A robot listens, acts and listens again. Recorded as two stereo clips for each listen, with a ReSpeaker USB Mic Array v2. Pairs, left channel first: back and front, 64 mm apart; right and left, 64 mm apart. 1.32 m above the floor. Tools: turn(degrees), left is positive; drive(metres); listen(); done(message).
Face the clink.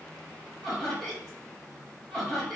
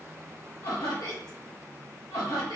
listen()
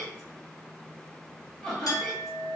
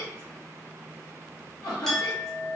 turn(degrees=-175)
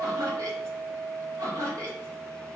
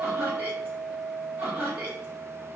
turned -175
turn(degrees=-55)
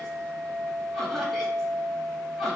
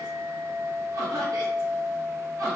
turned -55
turn(degrees=10)
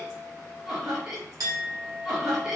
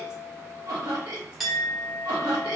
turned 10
done("Found it: a clink, straight ahead.")